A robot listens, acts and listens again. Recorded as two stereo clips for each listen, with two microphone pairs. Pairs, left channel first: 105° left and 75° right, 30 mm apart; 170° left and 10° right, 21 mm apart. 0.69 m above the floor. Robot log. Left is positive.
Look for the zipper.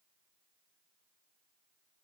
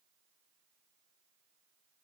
cmd idle
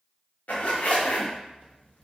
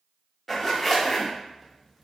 note: The zipper: 90° left.
cmd yaw +90
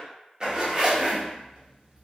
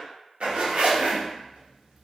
note: The zipper is now 15° right.
cmd yaw -15
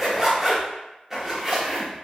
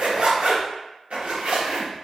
end: Found it: a zipper, straight ahead, under 1 m away.